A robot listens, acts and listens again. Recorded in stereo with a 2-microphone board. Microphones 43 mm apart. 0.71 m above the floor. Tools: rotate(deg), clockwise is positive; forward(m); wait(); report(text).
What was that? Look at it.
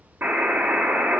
rotate(55)
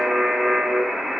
rotate(20)
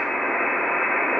report("Facing the buzzer.")